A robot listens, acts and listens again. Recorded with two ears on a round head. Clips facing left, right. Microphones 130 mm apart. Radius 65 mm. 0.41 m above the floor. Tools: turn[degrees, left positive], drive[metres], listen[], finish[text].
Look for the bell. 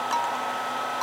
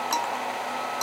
Thought: The bell: about 55° right or 125° right.
Action: turn[-55]
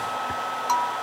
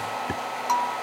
Action: listen[]
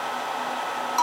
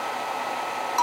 Action: finish[Found it: a bell, straight ahead.]